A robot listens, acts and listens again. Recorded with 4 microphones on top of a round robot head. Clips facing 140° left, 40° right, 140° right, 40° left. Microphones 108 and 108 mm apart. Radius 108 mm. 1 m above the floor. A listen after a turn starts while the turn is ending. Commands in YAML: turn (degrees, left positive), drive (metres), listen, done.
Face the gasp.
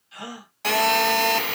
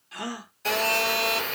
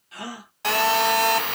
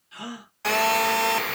turn: -90
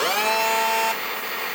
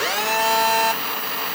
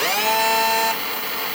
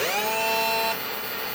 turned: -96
turn: 10
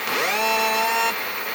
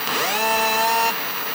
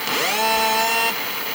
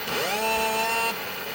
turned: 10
done: "I heard a gasp from this way, but can't make it out now."